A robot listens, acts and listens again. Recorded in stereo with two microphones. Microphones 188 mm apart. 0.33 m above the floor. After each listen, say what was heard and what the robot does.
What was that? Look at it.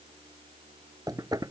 The knocking: about 20° right or 160° right. Turn 20° right.
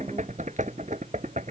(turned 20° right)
So it is at 140° right. Turn 140° right.
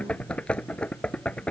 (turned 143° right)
Facing the knocking.